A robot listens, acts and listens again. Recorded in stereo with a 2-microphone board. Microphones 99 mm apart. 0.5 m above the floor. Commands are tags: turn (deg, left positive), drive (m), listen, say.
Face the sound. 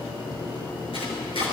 <turn deg="90"/>
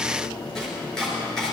<say>Facing the chopping, 2 to 4 m away.</say>